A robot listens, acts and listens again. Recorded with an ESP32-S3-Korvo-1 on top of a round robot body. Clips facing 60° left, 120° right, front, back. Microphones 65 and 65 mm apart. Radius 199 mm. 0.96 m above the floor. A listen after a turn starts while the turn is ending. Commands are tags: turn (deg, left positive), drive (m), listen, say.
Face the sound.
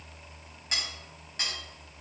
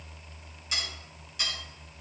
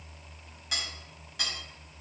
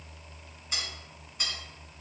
<turn deg="10"/>
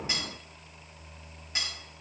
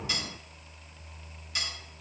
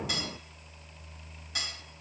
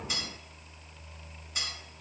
<say>Found it: cutlery clinking, straight ahead.</say>